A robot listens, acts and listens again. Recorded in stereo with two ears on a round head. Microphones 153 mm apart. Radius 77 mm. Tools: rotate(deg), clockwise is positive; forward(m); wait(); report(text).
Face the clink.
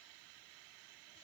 wait()
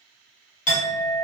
rotate(-45)
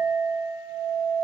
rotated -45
rotate(-10)
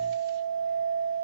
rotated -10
report("Facing the clink.")